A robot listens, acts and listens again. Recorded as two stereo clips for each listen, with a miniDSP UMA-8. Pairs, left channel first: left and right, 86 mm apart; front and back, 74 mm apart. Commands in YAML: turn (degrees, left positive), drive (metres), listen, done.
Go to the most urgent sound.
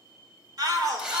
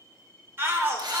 turn: -125
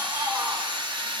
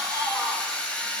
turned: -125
listen: true
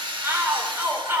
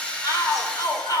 turn: -30
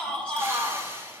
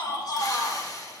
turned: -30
turn: 15
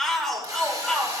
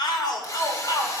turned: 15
drive: 1.0
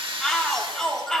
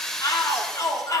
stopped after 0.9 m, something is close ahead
done: "Arrived at the shout, straight ahead."